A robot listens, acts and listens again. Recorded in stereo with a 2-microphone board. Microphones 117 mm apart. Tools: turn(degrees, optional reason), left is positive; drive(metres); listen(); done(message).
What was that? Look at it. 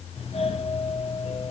turn(degrees=90)
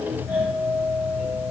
turn(degrees=-15, reason="So it is at 15° right.")
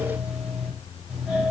done("Facing the doorbell.")